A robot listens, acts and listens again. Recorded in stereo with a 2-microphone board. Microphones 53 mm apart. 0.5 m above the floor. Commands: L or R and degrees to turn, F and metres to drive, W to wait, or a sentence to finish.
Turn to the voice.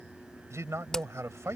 R70
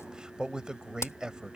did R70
R15
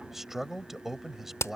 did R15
Facing the man speaking.